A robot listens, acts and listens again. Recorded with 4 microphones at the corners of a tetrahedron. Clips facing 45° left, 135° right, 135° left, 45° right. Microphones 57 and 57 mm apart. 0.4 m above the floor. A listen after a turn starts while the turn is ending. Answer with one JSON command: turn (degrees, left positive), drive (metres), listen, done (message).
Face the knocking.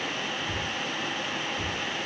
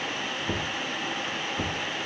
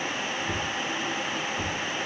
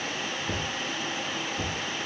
{"turn": -130}
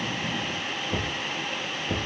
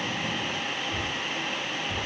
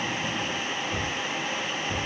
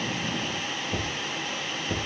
{"turn": 20}
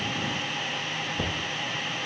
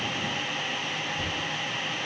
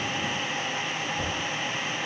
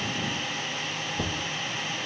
{"done": "Found it: knocking, straight ahead, over 4 m away."}